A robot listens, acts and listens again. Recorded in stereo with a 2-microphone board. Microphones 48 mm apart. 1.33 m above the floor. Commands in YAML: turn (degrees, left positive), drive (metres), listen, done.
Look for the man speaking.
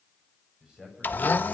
turn: -30
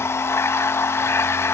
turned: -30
listen: true
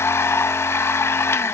listen: true
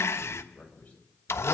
turn: 25
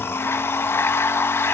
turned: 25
listen: true
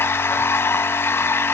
listen: true
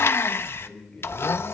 turn: 20
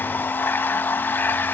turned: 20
listen: true
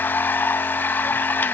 listen: true
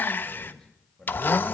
done: "Found it: a man speaking, straight ahead, over 4 m away."